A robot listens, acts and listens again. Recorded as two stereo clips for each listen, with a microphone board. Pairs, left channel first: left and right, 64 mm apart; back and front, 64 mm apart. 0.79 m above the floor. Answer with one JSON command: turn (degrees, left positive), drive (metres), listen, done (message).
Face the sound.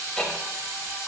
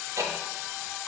{"turn": 15}
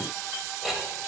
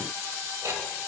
{"done": "Found it: ticking, straight ahead."}